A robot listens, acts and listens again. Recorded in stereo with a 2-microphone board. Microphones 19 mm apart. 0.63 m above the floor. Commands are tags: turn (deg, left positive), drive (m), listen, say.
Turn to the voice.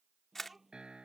<turn deg="-30"/>
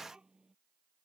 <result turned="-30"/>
<turn deg="-135"/>
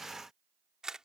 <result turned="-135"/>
<listen/>
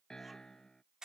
<listen/>
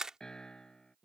<turn deg="-10"/>
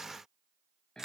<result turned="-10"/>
<listen/>
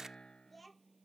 <say>Facing the child speaking.</say>